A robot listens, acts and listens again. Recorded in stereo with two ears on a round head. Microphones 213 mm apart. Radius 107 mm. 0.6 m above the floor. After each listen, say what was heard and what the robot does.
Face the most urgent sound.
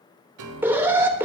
Turn 30° right.
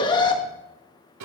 So it is at 20° left. Turn 20° left.
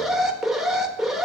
Found it: an alarm, straight ahead, 1 to 2 m away.